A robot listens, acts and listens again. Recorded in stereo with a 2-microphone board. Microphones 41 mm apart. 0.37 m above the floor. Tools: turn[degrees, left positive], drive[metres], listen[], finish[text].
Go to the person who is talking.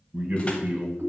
Thought: The man speaking: about 45° right or 135° right.
Action: turn[-45]
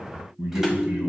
Thought: So it is at 85° right.
Action: turn[-85]
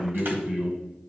Thought: The man speaking is now 15° right.
Action: turn[-15]
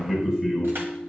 Action: drive[1.0]
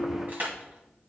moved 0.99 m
Action: listen[]
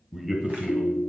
Thought: The man speaking is now 10° right.
Action: turn[-10]
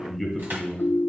Action: drive[1.0]
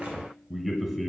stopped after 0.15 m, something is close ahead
Thought: The man speaking is now 10° right.
Action: turn[-10]
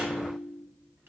Action: listen[]
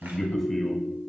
Action: finish[Arrived at the man speaking, straight ahead.]